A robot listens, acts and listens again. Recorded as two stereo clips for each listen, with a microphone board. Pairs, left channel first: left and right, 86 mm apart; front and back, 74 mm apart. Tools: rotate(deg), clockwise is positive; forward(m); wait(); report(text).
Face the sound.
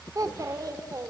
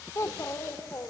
rotate(50)
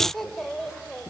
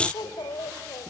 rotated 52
report("Found it: a child speaking, straight ahead, 2 to 4 m away.")